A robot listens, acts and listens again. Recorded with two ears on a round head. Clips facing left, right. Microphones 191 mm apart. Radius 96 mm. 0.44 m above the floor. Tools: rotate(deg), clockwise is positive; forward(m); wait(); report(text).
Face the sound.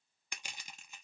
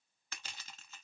rotate(-30)
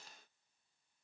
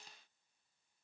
wait()
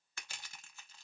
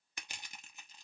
rotate(15)
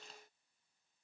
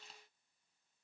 wait()
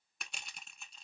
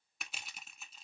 report("Facing the crushing.")